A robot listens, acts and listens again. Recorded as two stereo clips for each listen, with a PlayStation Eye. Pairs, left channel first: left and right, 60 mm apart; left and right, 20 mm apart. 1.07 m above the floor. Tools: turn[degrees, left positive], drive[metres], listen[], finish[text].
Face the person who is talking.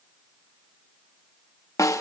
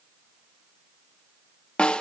Action: listen[]
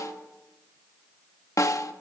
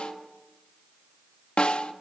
Action: listen[]
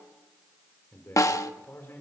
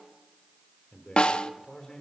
Thought: The man speaking: about 45° left or 135° left.
Action: turn[45]
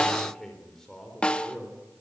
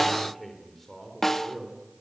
Thought: So it is at 10° left.
Action: turn[10]
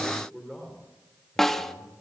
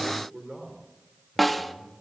Action: finish[Found it: a man speaking, straight ahead, 2 to 4 m away.]